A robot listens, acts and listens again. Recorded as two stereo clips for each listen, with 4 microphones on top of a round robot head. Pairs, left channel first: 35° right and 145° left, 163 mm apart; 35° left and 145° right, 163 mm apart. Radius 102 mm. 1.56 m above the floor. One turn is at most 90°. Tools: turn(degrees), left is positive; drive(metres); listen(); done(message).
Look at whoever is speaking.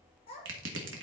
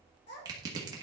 turn(degrees=20)
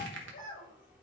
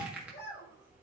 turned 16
done("Facing the child speaking.")